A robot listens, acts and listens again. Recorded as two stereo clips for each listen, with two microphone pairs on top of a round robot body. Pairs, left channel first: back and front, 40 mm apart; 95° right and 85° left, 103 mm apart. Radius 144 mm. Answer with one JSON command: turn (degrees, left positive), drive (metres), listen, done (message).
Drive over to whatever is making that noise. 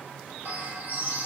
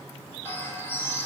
{"turn": -25}
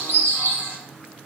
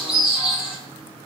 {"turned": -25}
{"drive": 1.0}
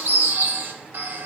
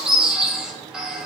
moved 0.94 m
{"drive": 1.0}
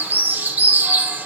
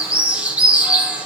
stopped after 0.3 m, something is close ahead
{"turn": 15}
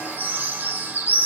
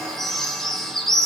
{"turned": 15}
{"done": "Arrived at the bird, straight ahead."}